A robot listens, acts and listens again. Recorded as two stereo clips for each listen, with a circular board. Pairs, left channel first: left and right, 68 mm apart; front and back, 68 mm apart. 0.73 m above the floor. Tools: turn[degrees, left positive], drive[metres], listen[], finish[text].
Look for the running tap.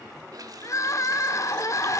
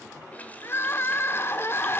Thought: The running tap: 65° right.
Action: turn[-65]
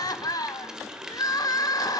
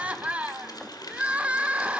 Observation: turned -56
Thought: The running tap is now 10° right.
Action: turn[-10]
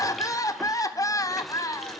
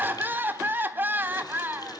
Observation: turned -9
Action: listen[]
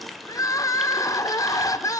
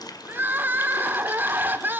Action: finish[Found it: a running tap, straight ahead.]